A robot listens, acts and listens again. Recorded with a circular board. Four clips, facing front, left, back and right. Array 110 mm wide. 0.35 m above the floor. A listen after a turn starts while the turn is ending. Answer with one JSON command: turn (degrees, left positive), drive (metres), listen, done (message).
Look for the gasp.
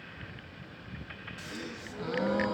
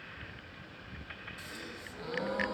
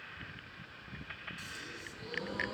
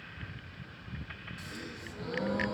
{"done": "Facing the gasp, 1 to 2 m away."}